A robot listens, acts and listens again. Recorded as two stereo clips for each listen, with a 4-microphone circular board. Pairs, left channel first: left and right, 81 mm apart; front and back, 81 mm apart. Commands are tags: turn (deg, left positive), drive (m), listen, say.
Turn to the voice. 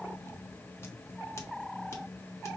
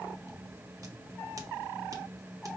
<listen/>
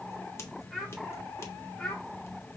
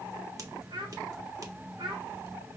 <turn deg="165"/>
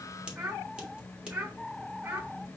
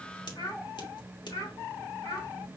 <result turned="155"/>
<turn deg="-30"/>
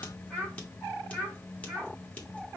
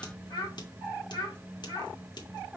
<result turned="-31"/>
<say>Facing the child speaking, 1 to 2 m away.</say>